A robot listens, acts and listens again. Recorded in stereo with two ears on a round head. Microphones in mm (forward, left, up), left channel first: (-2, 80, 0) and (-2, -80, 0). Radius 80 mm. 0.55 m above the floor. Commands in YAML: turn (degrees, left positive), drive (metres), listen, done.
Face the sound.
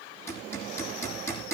turn: 30
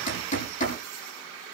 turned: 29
turn: 135
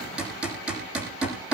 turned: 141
done: "Found it: hammering, straight ahead."